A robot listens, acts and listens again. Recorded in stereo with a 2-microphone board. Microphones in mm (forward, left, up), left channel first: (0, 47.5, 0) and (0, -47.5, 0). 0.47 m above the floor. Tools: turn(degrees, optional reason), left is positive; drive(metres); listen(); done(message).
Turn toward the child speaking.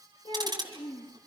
turn(degrees=65, reason="The child speaking: about 65° left or 115° left.")
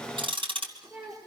turn(degrees=-10, reason="So it is at 10° right.")
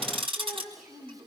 done("Found it: a child speaking, straight ahead, over 4 m away.")